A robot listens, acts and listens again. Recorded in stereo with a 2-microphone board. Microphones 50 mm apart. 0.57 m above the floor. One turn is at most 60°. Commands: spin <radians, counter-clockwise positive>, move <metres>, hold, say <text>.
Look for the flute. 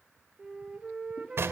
spin -0.35
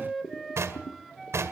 say Found it: a flute, straight ahead, 1 to 2 m away.